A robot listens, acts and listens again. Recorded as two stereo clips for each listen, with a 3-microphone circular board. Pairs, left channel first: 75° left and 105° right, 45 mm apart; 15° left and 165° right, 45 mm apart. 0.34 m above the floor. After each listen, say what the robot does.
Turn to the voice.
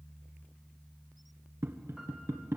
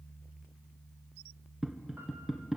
Keep listening.
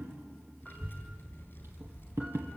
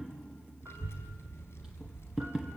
Turn 40° left.
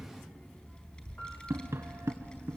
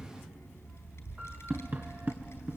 Turn 10° left.
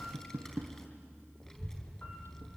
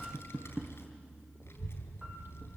Found it: a child speaking, straight ahead.